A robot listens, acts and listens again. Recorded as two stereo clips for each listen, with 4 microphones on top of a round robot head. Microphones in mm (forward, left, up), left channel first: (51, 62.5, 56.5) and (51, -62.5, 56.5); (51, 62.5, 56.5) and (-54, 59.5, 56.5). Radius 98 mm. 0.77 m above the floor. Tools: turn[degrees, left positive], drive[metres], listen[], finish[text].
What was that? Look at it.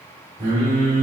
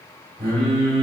Thought: The singing: 115° right.
Action: turn[-115]
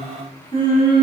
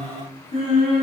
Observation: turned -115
Thought: The singing is now 45° left.
Action: turn[45]
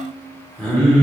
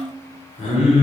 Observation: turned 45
Thought: The singing is now 10° left.
Action: turn[10]
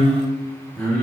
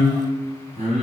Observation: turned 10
Thought: The singing is now 10° left.
Action: turn[10]
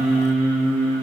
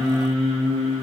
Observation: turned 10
Thought: The singing is now 10° left.
Action: turn[10]
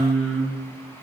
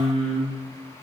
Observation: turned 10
Action: finish[Facing the singing, 2 to 4 m away.]